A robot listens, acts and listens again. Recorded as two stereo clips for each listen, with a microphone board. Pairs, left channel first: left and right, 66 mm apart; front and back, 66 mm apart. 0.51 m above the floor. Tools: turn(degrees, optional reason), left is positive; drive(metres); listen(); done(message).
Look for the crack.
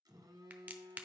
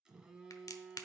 turn(degrees=-25, reason="The crack: 25° right.")
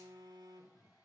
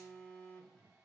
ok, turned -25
done("I heard a crack from this way, but can't make it out now.")